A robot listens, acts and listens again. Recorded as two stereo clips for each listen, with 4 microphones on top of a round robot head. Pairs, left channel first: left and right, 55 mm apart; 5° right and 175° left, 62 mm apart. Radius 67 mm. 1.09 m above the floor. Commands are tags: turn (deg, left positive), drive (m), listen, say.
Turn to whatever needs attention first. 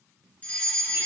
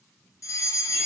<turn deg="25"/>
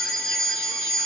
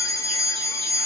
<turn deg="15"/>
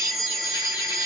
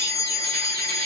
<turn deg="10"/>
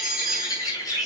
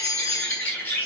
<say>Facing the fire alarm, 2 to 4 m away.</say>